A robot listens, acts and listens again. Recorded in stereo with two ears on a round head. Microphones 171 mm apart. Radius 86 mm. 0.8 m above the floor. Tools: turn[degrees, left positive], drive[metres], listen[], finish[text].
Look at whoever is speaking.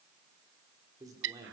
Thought: The man speaking: about 20° right or 160° right.
Action: turn[-20]
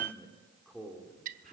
Action: finish[Facing the man speaking, 2 to 4 m away.]